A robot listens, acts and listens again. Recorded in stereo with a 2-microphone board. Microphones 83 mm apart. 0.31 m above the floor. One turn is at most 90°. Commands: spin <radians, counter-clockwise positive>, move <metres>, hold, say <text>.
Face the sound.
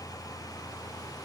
hold
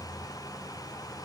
hold
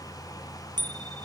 spin -1.05
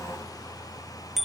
say Found it: a bicycle bell, straight ahead.